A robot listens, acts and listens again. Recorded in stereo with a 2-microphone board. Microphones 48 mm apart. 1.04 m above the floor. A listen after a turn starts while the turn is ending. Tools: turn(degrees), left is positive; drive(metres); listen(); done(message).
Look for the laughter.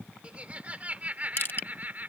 turn(degrees=-40)
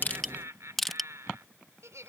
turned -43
turn(degrees=-100)
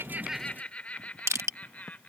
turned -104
turn(degrees=35)
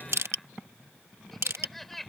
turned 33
done("Found it: laughter, straight ahead.")